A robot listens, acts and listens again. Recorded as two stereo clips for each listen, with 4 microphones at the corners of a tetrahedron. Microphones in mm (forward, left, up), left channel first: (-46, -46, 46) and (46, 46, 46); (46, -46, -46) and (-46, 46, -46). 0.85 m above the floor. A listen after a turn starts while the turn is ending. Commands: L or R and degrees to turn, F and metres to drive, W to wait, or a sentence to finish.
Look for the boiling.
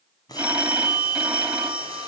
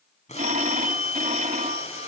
R75
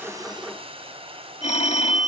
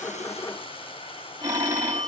Facing the boiling, over 4 m away.